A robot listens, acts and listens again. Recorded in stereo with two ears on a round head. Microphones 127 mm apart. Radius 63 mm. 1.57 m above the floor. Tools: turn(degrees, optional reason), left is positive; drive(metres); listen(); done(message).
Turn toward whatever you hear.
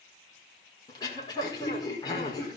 turn(degrees=30, reason="The throat clearing: about 30° left or 150° left.")
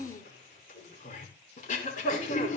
turn(degrees=120, reason="So it is at 120° left.")
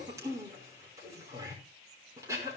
turn(degrees=-20, reason="The throat clearing is now 20° right.")
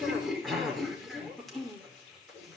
done("Found it: throat clearing, straight ahead, over 4 m away.")